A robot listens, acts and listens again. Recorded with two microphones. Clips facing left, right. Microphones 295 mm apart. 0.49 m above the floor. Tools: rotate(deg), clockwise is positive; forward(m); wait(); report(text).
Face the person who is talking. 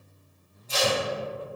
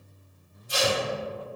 wait()
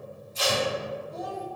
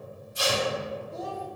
rotate(30)
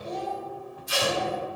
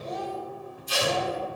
report("Facing the child speaking.")